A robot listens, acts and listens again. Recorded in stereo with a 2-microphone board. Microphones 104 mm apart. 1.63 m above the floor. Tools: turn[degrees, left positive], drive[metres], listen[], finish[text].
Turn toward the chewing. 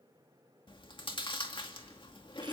Thought: The chewing: about 50° left or 130° left.
Action: turn[50]
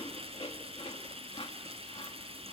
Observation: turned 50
Thought: So it is at 75° left.
Action: turn[75]
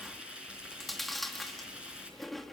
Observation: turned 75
Action: finish[Facing the chewing.]